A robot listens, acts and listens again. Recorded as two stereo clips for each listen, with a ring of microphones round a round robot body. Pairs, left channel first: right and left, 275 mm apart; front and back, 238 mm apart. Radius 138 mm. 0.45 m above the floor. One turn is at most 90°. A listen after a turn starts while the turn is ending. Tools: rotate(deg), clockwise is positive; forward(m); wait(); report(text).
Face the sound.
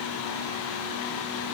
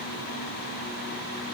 wait()
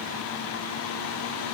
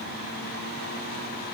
wait()
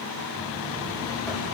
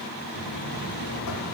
report("Found it: a buzzer, straight ahead.")